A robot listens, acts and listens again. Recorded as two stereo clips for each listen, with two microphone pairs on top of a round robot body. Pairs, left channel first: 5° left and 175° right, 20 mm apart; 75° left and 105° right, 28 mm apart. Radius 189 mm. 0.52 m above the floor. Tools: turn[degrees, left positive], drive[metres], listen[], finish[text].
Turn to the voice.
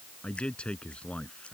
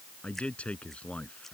Thought: The man speaking: 25° left.
Action: turn[25]
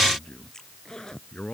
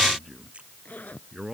Thought: The man speaking is now 25° right.
Action: turn[-25]
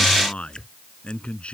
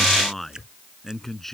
Thought: The man speaking is now 10° right.
Action: turn[-10]
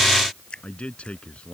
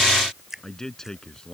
Action: finish[Found it: a man speaking, straight ahead.]